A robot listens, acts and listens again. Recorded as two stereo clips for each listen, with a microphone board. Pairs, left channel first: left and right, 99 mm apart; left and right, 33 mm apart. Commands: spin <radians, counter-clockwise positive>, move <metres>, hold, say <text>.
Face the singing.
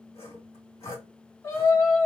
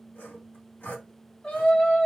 spin 0.44
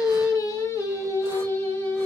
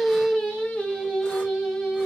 spin 0.52
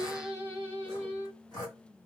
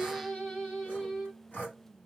spin 0.52
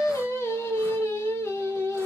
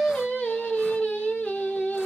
spin 0.52
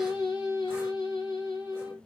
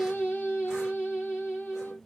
spin 2.36
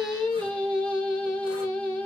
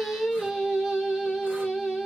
spin 0.17
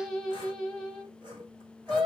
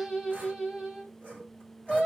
say Facing the singing.